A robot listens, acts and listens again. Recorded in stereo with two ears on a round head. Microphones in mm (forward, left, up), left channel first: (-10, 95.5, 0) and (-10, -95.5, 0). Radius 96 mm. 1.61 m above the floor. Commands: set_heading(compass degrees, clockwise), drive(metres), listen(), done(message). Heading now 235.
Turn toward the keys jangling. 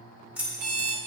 set_heading(265)
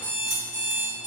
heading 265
listen()
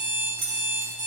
set_heading(20)
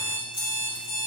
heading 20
listen()
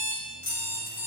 set_heading(345)
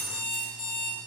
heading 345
listen()
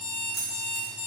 done("Found it: keys jangling, straight ahead.")